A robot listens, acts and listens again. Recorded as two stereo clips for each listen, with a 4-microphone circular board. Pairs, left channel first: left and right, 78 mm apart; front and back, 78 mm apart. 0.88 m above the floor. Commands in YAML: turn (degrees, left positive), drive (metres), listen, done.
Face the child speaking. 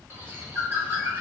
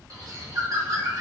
listen: true
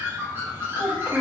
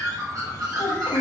turn: -15
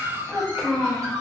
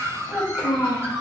done: "Facing the child speaking, 1 to 2 m away."